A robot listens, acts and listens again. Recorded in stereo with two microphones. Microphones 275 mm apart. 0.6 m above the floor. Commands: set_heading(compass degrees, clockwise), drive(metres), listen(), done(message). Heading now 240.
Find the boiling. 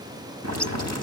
set_heading(315)
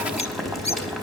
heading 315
done("Found it: boiling, straight ahead.")